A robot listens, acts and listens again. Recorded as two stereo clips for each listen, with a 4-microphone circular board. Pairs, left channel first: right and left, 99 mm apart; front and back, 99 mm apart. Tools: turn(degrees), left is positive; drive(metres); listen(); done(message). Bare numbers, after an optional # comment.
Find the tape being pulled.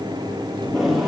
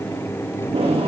# The tape being pulled: straight behind.
turn(180)
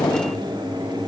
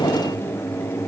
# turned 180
# The tape being pulled is now 30° right.
turn(-30)
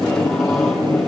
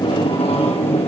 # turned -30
done("Facing the tape being pulled, over 4 m away.")